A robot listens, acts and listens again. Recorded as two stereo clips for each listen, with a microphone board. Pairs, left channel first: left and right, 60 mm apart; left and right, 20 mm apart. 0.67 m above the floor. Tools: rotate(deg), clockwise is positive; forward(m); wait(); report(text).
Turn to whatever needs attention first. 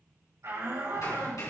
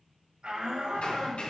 rotate(60)
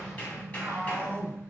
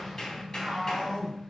rotate(55)
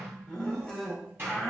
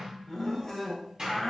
rotate(-15)
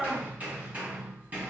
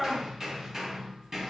report("Facing the shout, 2 to 4 m away.")